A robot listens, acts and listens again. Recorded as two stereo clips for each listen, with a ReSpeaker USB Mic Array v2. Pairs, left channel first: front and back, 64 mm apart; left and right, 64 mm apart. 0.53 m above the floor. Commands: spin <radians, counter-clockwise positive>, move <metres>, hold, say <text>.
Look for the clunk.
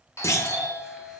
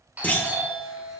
spin 0.52
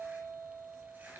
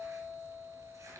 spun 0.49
say I heard a clunk from this way, but can't make it out now.